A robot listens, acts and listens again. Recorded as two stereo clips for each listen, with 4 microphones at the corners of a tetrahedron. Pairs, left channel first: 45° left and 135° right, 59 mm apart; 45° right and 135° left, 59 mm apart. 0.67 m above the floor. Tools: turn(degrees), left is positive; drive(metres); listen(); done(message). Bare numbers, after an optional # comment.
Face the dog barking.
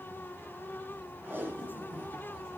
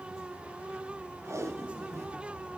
listen()
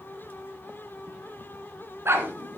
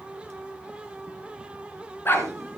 # The dog barking: 95° right.
turn(-95)
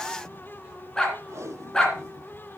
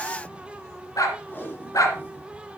# The dog barking is now 30° right.
turn(-30)
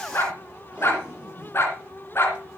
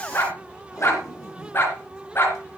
done("Found it: a dog barking, straight ahead, 2 to 4 m away.")